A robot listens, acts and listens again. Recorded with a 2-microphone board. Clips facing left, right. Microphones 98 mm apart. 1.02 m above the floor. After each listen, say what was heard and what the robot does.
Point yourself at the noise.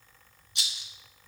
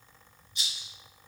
Turn 90° left.
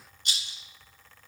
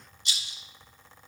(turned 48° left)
So it is at 55° left. Turn 55° left.
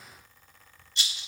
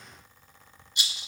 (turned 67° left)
The rattle is now 15° right. Turn 15° right.
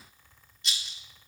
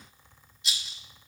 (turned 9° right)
Found it: a rattle, straight ahead.